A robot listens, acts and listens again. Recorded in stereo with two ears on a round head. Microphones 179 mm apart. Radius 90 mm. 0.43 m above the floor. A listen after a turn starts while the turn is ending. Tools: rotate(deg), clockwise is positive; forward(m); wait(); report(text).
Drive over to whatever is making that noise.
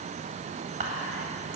rotate(35)
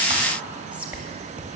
rotate(10)
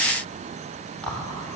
forward(1.0)
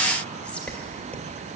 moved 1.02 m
rotate(-10)
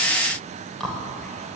forward(1.0)
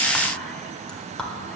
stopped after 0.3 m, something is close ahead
report("I am next to the whispering.")